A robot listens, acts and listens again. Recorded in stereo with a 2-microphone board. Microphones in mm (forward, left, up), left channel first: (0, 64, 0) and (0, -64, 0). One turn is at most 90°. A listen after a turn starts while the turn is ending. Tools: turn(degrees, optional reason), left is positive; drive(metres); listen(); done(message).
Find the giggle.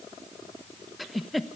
turn(degrees=30)
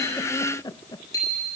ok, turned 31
turn(degrees=90, reason="So it is at 150° left.")
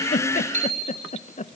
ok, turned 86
turn(degrees=60, reason="The giggle is now 60° left.")
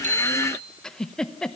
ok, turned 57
done("Found it: a giggle, straight ahead, under 1 m away.")